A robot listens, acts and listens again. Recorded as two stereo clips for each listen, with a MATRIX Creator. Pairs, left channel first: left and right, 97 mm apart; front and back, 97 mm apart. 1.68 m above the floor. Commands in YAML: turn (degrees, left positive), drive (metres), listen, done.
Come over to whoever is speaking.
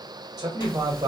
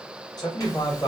turn: -45
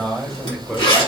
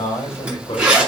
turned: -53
drive: 1.0
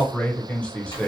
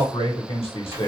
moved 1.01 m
turn: 10
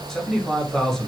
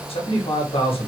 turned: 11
drive: 1.0
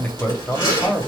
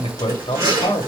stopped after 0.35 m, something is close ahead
turn: 15
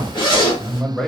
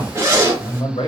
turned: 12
done: "Arrived at the man speaking, straight ahead."